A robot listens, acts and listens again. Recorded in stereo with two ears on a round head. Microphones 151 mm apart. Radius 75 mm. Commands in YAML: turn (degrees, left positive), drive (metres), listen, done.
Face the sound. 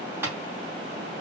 turn: -30
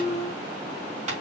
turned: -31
turn: -135
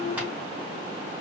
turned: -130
listen: true
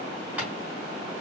listen: true
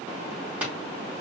turn: -10
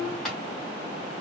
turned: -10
done: "Facing the tapping."